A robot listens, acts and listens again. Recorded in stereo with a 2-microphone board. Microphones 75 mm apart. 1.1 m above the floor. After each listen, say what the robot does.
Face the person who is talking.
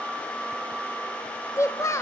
Turn 40° left.
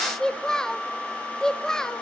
Turn 10° left.
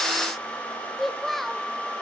Found it: a child speaking, straight ahead, under 1 m away.